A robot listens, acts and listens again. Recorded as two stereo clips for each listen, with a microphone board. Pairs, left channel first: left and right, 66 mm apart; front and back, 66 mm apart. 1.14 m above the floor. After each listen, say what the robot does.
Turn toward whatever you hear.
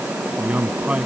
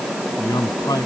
Turn 20° right.
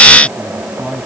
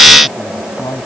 Found it: a man speaking, straight ahead.